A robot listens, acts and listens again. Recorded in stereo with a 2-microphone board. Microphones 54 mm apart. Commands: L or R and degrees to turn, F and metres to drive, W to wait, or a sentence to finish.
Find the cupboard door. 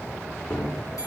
L45
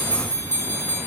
W
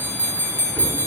W
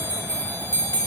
I heard a cupboard door, but can't make it out now. It was about straight ahead or 90° left.